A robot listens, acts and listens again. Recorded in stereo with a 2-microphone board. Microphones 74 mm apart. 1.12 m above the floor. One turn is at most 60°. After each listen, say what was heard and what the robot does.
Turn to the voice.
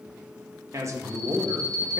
The man speaking: about 45° right or 135° right. Turn 45° right.
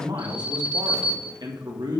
So it is at 85° right. Turn 60° right.
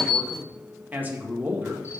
The man speaking is now 25° right. Turn 25° right.
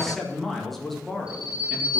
Facing the man speaking.